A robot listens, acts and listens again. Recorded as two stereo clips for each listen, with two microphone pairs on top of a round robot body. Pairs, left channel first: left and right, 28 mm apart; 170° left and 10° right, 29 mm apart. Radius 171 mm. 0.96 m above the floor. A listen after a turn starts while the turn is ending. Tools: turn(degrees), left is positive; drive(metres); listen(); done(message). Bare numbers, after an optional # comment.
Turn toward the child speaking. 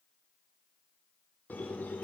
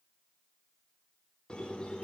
listen()
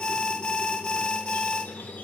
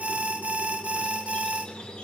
listen()
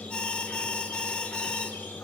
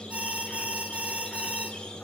done("I can't make out a child speaking, only a squeak and an alarm.")